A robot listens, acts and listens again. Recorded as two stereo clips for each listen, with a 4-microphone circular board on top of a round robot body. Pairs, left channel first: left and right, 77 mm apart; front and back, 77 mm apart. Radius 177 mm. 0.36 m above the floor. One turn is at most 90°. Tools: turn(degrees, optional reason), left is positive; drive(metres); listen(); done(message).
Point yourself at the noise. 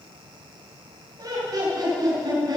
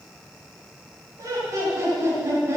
turn(degrees=-90, reason="The laughter: 120° right.")
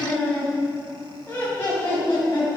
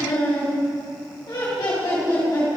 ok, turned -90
turn(degrees=40, reason="The laughter is now 40° left.")
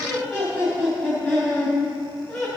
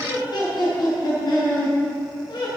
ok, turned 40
done("Facing the laughter.")